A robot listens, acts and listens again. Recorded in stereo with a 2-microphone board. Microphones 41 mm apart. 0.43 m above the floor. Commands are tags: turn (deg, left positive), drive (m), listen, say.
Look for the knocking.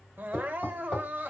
<turn deg="15"/>
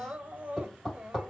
<say>Facing the knocking, 1 to 2 m away.</say>